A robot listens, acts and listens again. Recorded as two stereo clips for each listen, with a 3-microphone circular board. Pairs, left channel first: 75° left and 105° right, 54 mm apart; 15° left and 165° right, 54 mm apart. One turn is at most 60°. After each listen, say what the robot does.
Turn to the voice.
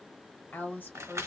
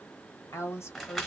Turn 25° left.
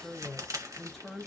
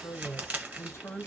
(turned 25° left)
Facing the woman speaking.